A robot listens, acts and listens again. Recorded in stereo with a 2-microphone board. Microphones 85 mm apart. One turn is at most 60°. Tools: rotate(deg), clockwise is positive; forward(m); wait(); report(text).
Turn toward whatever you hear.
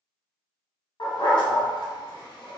rotate(-60)
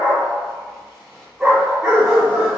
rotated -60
rotate(15)
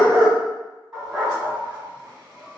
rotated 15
rotate(10)
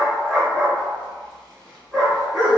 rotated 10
report("Facing the dog barking, 1 to 2 m away.")